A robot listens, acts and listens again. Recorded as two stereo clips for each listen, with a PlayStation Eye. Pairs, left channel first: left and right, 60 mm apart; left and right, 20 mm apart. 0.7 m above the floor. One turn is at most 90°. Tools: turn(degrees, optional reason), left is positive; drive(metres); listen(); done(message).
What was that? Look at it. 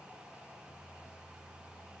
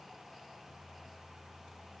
listen()
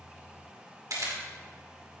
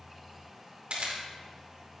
turn(degrees=-70, reason="The camera shutter: about 70° right or 110° right.")
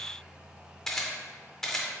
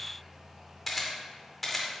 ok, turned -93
turn(degrees=10, reason="So it is at 10° left.")
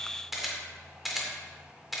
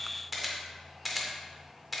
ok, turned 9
done("Found it: a camera shutter, straight ahead, 1 to 2 m away.")